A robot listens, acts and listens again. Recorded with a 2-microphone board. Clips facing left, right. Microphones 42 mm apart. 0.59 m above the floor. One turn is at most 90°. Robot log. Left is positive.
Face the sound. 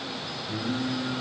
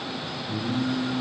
note: The singing: about 65° left or 115° left.
cmd yaw +65
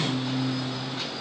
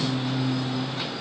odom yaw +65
end: Facing the singing, 2 to 4 m away.